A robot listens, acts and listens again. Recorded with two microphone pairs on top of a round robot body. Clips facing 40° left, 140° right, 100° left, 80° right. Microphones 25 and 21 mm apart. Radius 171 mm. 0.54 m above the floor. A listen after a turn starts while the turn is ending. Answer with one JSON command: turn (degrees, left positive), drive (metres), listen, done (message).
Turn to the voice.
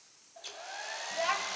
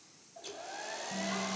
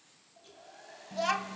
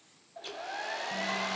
{"turn": 65}
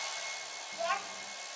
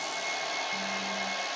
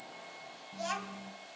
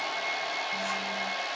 {"turn": 15}
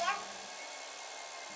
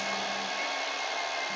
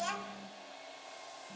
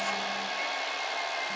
{"listen": true}
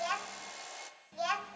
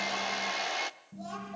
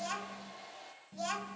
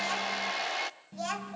{"done": "Facing the child speaking, 2 to 4 m away."}